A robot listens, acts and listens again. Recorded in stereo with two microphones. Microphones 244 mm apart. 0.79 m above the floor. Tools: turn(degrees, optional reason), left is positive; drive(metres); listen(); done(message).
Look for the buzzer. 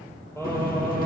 turn(degrees=35, reason="The buzzer: about 35° left or 145° left.")
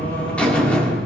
done("Found it: a buzzer, straight ahead, 2 to 4 m away.")